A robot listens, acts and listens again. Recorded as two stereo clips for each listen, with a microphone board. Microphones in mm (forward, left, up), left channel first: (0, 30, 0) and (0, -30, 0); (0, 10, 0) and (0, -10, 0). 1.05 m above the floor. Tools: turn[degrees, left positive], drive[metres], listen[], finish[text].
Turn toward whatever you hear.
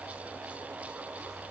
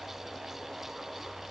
Action: listen[]
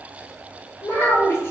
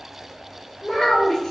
Thought: The child speaking: about 45° left or 135° left.
Action: turn[45]
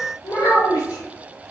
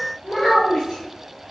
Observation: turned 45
Thought: So it is at 90° left.
Action: turn[90]
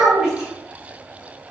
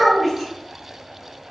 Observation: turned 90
Thought: The child speaking is now 10° right.
Action: turn[-10]
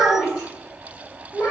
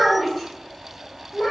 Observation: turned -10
Action: finish[Facing the child speaking, 1 to 2 m away.]